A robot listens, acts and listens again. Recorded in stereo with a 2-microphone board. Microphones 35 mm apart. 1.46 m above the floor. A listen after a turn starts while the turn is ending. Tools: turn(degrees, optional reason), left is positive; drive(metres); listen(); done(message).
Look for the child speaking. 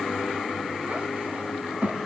turn(degrees=-50, reason="The child speaking: about 50° right or 130° right.")
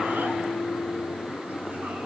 listen()
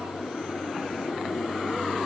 listen()
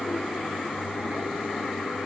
done("I heard a child speaking, but can't make it out now. It was about straight ahead or 80° right.")